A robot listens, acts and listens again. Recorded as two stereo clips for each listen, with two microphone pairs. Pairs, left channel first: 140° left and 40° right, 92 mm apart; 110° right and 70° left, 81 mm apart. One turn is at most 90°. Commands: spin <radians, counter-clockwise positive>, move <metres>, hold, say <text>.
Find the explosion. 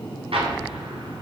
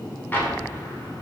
spin -0.79
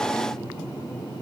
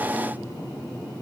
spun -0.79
say Facing where the explosion came from. I can't hear it now.